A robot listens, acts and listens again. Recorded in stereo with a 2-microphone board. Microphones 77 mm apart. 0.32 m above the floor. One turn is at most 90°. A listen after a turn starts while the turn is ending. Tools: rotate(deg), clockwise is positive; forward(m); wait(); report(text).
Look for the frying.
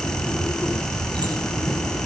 wait()
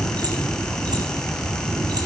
wait()
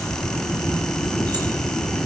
report("I can't make out frying.")